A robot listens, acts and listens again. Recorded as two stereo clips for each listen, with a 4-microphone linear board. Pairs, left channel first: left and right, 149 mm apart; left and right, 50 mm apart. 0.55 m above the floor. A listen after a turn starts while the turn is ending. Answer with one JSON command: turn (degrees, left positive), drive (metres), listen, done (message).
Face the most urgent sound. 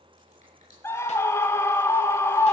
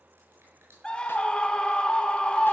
{"turn": 15}
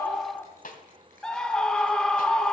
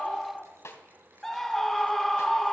{"done": "Found it: a scream, straight ahead."}